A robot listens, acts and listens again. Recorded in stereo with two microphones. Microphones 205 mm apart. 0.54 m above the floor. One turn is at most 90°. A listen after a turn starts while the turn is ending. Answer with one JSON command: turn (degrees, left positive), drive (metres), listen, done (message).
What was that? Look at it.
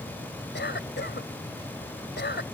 {"turn": 65}
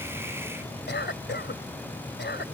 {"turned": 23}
{"turn": 80}
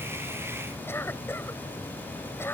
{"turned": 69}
{"turn": 15}
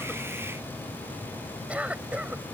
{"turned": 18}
{"done": "Facing the cough."}